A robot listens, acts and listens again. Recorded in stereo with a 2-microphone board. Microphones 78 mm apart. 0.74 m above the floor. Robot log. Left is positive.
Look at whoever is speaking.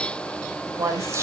note: The woman speaking: about 40° right or 140° right.
cmd yaw -40
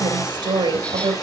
note: So it is at 100° right.
cmd yaw -100
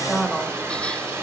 end: Found it: a woman speaking, straight ahead, 2 to 4 m away.